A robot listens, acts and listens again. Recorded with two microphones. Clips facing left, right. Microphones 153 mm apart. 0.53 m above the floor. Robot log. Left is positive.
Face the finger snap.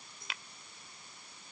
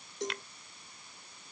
cmd yaw +30
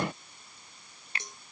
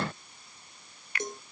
note: So it is at 150° left.
cmd yaw +150
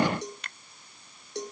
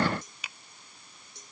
end: Found it: a finger snap, straight ahead.